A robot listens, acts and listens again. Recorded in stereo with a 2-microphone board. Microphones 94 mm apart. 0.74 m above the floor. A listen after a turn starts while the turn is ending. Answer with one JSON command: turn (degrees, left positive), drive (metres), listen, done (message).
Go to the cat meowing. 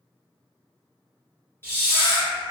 {"turn": 65}
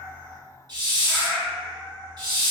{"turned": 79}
{"turn": -15}
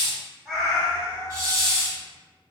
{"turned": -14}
{"drive": 1.0}
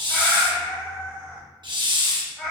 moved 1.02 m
{"drive": 1.0}
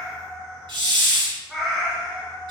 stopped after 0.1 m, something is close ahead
{"done": "Arrived at the cat meowing, straight ahead."}